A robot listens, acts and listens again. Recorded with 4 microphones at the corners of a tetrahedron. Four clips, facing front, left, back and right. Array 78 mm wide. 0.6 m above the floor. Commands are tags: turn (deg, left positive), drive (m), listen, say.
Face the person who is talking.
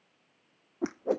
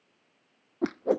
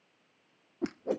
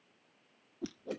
<listen/>
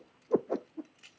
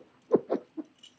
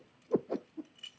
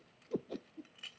<listen/>
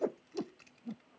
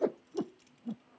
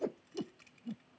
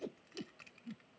<say>I can't make out anyone speaking, only a whoosh and keys jangling.</say>